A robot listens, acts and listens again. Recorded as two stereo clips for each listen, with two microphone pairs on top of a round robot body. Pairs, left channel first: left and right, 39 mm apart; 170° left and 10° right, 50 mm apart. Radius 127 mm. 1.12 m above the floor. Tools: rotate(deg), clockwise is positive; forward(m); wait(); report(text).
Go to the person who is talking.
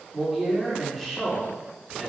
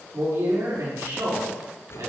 forward(1.0)
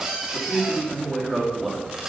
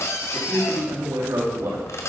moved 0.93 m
forward(1.0)
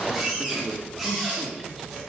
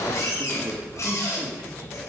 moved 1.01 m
wait()
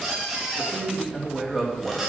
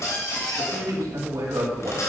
forward(1.0)
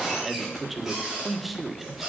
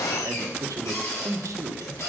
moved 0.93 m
forward(1.0)
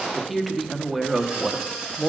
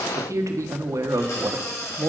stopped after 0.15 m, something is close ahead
report("Arrived at the man speaking, straight ahead.")